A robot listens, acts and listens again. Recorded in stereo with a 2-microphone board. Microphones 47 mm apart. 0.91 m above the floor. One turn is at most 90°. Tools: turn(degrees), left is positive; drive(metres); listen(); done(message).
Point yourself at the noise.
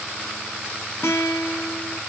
turn(degrees=75)
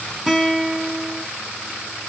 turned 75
done("Found it: a guitar, straight ahead, 1 to 2 m away.")